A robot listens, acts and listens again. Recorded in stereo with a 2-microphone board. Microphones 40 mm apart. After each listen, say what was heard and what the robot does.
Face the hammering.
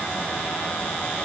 Keep listening.
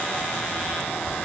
Keep listening.
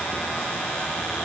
I can't make out hammering.